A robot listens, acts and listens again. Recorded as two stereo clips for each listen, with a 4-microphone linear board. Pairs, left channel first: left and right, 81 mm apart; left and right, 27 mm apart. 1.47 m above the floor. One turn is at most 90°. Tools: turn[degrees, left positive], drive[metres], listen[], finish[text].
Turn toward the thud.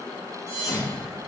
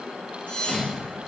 Thought: The thud: about 50° left or 130° left.
Action: turn[50]
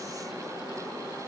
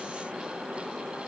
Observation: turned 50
Action: listen[]
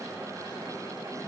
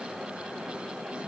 Action: finish[I heard a thud, but can't make it out now. It was about straight ahead or 80° left.]